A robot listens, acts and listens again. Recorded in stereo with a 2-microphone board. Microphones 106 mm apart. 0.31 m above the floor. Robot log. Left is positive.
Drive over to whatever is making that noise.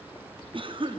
note: The cough: about 55° right or 125° right.
cmd yaw -55
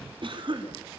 note: So it is at 60° right.
cmd yaw -60
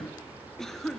cmd fwd 1.0
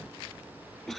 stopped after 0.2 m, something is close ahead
end: Something is in my way. I am facing the cough but have not reached it.